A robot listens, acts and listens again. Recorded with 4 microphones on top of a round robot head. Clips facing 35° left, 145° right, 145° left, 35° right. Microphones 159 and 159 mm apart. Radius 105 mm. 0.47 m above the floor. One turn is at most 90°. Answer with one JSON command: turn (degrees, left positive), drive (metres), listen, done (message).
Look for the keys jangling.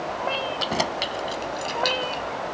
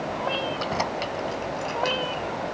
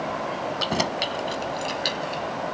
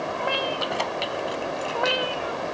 {"turn": 90}
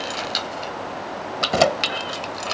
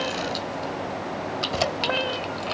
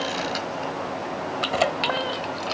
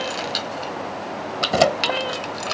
{"done": "Facing the keys jangling."}